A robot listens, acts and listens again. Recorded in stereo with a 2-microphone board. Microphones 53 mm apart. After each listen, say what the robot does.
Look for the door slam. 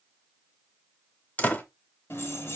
Turn 35° left.
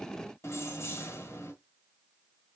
Keep listening.
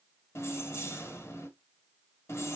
I heard a door slam, but can't make it out now. It was about straight ahead or 110° left.